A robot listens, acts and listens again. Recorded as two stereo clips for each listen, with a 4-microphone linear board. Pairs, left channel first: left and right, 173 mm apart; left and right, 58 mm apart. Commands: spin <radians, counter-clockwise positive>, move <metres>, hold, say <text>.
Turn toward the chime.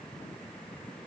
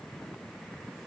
hold
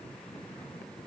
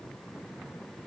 hold
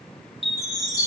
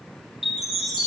spin 0.52
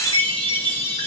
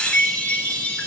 spin 2.62
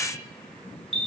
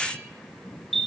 say Facing the chime.